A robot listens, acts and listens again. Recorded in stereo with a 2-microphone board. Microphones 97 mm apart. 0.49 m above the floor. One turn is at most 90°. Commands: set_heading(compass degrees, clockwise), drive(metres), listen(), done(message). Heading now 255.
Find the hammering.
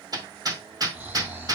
set_heading(295)
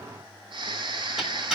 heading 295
done("Facing the hammering.")